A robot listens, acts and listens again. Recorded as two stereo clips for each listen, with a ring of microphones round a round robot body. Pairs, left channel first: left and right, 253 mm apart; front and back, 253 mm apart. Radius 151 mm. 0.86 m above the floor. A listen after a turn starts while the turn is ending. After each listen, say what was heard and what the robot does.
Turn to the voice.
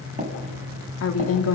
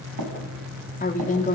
The woman speaking: 60° left. Turn 60° left.
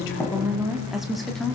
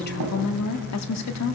Found it: a woman speaking, straight ahead, 2 to 4 m away.